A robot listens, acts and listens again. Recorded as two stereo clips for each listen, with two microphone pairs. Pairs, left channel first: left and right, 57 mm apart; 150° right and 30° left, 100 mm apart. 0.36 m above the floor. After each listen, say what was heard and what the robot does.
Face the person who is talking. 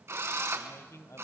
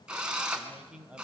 The man speaking: 105° left. Turn 105° left.
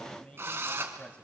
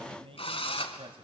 The man speaking is now 25° left. Turn 25° left.
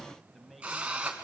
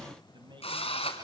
Facing the man speaking, 2 to 4 m away.